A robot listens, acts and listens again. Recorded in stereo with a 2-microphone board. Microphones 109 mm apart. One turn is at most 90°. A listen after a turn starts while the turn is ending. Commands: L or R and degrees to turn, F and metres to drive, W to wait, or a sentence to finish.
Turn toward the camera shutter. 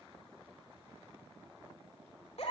W
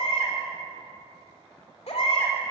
W
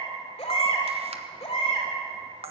R65
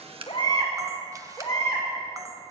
W
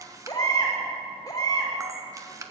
R35
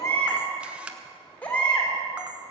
R10
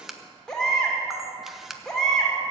Facing the camera shutter, 1 to 2 m away.